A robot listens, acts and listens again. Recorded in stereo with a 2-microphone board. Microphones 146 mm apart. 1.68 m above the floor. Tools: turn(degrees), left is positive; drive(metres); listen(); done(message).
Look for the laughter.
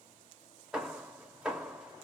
listen()
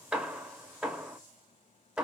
listen()
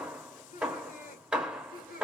turn(degrees=75)
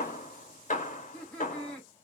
turn(degrees=10)
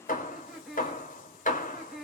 done("Facing the laughter, 1 to 2 m away.")